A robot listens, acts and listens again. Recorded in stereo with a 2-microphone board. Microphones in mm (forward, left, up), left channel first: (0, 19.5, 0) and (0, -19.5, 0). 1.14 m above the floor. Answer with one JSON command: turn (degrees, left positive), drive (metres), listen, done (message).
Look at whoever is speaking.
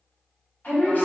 {"turn": 50}
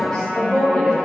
{"turn": 15}
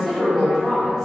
{"done": "Found it: a woman speaking, straight ahead."}